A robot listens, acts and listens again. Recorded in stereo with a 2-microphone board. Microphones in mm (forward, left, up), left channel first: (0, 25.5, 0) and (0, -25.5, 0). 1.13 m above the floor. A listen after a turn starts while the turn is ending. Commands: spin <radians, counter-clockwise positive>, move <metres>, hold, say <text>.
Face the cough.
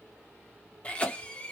spin 0.44
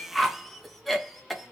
say Found it: a cough, straight ahead.